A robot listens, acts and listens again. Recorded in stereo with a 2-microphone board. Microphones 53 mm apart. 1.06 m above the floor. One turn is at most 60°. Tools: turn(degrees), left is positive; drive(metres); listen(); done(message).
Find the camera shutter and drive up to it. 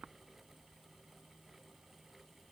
listen()
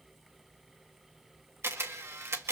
turn(degrees=-55)
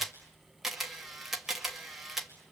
drive(metres=1.0)
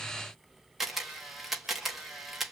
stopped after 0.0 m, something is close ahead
done("Blocked. The camera shutter is further on, straight ahead.")